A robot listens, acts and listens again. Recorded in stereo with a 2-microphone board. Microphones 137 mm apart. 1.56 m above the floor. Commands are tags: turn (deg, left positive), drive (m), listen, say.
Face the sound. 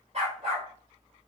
<turn deg="-45"/>
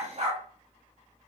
<turn deg="-75"/>
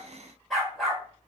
<say>Facing the dog barking, 2 to 4 m away.</say>